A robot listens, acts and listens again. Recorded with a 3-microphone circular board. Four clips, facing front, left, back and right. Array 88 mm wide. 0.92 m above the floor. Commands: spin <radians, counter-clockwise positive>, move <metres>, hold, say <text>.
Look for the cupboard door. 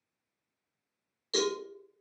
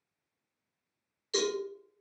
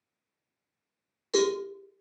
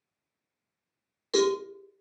hold
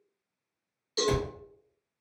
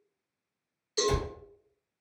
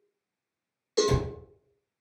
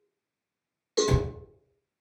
spin -1.05
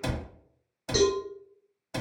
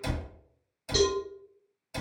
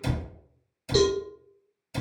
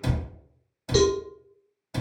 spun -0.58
spin -0.44
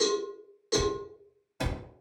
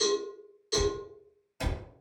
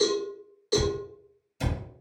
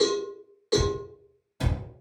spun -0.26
spin -0.17
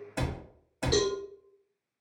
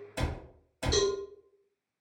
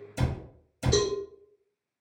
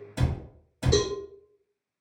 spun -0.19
say Found it: a cupboard door, straight ahead, under 1 m away.